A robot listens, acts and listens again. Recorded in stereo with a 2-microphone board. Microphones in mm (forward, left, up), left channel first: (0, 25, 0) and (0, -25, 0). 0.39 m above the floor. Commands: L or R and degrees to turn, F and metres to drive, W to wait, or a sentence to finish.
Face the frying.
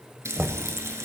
R90
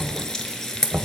L10
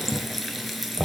Found it: frying, straight ahead, under 1 m away.